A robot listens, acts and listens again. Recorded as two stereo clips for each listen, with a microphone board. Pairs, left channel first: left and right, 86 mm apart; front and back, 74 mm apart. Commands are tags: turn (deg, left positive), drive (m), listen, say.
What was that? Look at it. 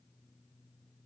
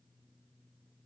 <listen/>
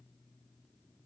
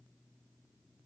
<listen/>
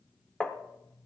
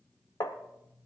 <turn deg="10"/>
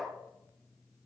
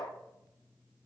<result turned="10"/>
<say>Facing the tapping.</say>